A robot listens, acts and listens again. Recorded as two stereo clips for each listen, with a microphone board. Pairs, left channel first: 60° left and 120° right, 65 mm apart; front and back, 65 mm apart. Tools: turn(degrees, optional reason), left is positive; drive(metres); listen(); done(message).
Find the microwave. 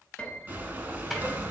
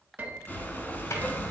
turn(degrees=-30, reason="The microwave: 30° right.")
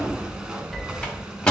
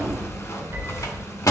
turn(degrees=-15, reason="The microwave is now 15° right.")
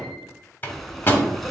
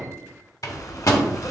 done("Found it: a microwave, straight ahead.")